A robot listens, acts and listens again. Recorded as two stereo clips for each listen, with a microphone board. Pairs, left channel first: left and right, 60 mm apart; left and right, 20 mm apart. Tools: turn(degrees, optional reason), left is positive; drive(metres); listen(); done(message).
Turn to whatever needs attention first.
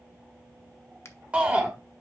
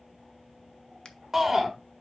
turn(degrees=-20, reason="The shout: about 20° right or 160° right.")
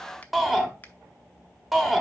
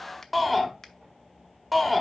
done("Facing the shout.")